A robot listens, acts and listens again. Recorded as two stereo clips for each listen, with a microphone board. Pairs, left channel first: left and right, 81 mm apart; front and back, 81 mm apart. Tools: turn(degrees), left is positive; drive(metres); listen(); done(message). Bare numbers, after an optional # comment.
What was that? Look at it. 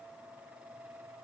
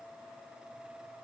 listen()
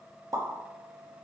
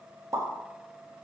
# The pop: 135° right.
turn(-135)
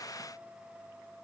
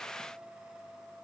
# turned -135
done("Facing where the pop came from. I can't hear it now.")